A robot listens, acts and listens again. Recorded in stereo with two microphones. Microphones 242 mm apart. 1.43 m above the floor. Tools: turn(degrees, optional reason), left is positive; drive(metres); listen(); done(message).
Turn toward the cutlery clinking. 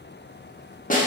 listen()
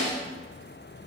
listen()
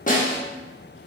done("I can't make out cutlery clinking, only a snare drum.")